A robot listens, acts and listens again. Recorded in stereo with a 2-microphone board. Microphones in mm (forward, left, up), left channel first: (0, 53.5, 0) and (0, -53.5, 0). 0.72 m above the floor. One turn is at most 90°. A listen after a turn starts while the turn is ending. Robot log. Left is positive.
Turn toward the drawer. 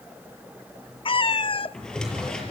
cmd yaw +30
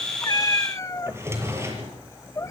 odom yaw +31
note: So it is at 25° right.
cmd yaw -25
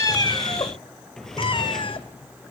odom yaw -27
end: Facing the drawer.